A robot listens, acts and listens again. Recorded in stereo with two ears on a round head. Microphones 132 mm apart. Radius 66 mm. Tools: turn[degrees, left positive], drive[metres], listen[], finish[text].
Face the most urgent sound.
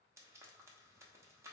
Action: listen[]
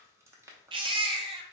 Thought: The baby crying: about 35° right or 145° right.
Action: turn[-35]
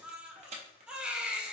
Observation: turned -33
Action: finish[Found it: a baby crying, straight ahead, under 1 m away.]